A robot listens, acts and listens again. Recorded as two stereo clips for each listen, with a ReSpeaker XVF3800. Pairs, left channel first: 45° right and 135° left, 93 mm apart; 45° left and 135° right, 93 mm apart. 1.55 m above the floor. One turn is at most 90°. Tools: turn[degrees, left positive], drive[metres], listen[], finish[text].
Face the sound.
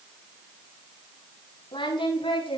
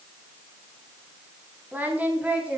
Thought: The singing: 60° right.
Action: turn[-60]
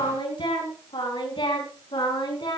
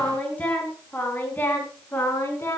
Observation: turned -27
Thought: The singing is now 20° right.
Action: turn[-20]
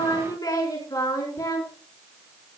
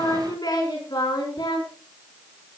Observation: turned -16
Action: finish[Facing the singing.]